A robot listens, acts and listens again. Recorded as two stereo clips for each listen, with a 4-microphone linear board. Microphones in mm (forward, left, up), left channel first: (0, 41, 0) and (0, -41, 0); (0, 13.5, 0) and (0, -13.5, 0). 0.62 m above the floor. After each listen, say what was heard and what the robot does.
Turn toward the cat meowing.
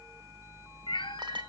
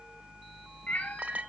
Turn 90° left.
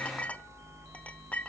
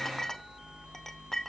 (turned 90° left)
Keep listening.
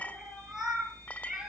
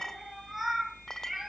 Facing the cat meowing, over 4 m away.